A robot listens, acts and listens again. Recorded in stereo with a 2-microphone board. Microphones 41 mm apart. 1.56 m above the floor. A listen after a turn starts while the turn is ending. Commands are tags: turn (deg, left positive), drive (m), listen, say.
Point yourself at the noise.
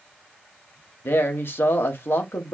<turn deg="65"/>
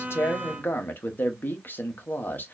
<turn deg="50"/>
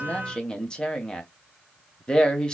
<turn deg="20"/>
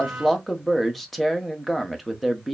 <say>Facing the man speaking.</say>